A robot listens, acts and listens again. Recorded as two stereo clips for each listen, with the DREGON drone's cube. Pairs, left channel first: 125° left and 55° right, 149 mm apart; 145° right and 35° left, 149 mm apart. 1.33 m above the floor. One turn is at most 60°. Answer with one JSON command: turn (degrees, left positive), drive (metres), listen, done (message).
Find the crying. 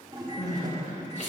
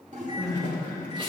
{"turn": 60}
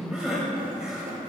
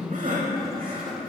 {"turn": 30}
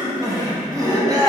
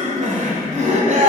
{"done": "Found it: crying, straight ahead."}